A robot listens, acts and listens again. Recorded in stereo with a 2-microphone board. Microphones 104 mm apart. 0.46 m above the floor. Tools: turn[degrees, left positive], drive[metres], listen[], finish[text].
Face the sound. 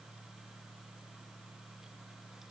Action: listen[]
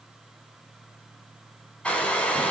Action: turn[30]
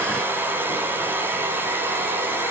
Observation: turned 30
Thought: So it is at 20° right.
Action: turn[-20]
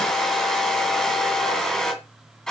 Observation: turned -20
Action: finish[Found it: a hair dryer, straight ahead.]